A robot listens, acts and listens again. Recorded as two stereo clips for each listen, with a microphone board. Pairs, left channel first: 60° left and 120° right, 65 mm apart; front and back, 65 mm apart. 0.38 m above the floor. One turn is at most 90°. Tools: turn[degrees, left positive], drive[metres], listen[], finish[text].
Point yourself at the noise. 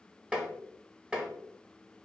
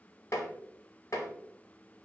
Thought: The tapping: 45° right.
Action: turn[-45]
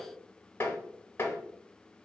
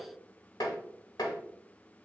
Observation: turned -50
Action: finish[Found it: tapping, straight ahead, under 1 m away.]